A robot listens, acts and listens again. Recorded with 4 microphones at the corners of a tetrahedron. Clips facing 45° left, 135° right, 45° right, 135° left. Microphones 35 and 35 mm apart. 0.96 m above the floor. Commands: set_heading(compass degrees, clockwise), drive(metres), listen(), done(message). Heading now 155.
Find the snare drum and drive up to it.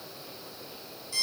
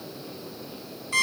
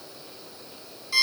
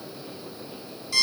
listen()
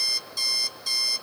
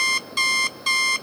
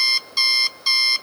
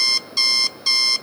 listen()
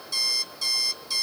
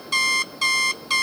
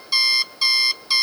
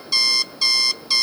done("I can't make out a snare drum to turn to.")